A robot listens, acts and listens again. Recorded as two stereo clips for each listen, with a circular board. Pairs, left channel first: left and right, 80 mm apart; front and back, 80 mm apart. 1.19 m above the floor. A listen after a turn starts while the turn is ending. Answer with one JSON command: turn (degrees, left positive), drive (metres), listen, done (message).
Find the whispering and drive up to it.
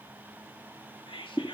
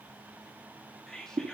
{"turn": 85}
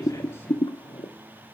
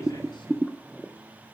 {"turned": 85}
{"listen": true}
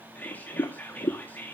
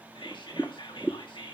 {"turn": 20}
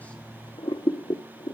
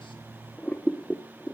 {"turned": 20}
{"listen": true}
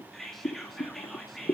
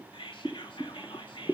{"drive": 1.0}
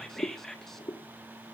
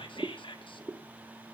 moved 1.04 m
{"drive": 1.0}
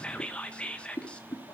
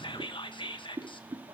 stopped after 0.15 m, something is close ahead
{"turn": 10}
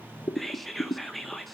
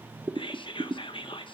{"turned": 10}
{"done": "I am next to the whispering."}